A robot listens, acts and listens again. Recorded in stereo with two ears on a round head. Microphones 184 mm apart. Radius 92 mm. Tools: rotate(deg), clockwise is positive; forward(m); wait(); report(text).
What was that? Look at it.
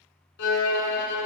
rotate(-55)
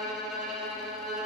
report("Found it: a violin, straight ahead, 1 to 2 m away.")